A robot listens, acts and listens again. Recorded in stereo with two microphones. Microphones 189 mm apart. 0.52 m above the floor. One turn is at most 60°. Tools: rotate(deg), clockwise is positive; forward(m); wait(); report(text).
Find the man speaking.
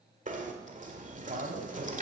rotate(50)
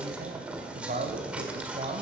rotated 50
rotate(45)
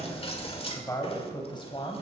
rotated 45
rotate(-30)
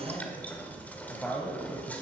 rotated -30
report("Facing the man speaking, 2 to 4 m away.")